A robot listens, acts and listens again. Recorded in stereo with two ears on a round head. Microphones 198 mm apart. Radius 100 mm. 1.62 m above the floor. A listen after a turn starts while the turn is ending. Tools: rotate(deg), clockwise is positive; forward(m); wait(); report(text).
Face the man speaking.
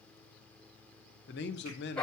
rotate(-50)
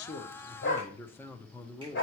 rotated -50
rotate(-10)
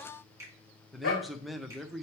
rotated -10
report("Found it: a man speaking, straight ahead.")